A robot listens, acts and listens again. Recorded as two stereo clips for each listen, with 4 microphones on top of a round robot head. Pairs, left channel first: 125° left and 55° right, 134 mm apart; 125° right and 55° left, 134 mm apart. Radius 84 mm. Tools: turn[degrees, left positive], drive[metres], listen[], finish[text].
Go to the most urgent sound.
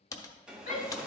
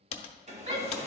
Thought: The shout: 100° left.
Action: turn[100]
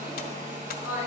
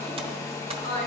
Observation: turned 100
Thought: The shout is now 15° left.
Action: turn[15]
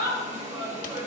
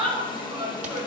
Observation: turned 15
Action: drive[1.0]
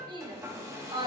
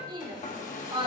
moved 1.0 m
Action: drive[1.0]
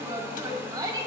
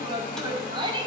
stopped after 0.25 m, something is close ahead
Action: finish[Arrived at the shout, straight ahead.]